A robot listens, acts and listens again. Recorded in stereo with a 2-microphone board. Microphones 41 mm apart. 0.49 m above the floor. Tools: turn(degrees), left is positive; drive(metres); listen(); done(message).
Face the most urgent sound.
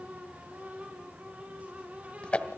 listen()
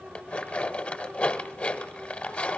listen()
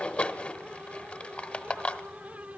done("I can't make out anything urgent to turn to.")